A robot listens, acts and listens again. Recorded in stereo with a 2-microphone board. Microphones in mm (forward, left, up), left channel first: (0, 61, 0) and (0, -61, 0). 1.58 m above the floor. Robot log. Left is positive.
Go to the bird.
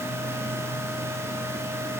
cmd idle
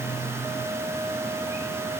cmd idle
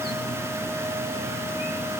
end: I can't make out a bird to turn to.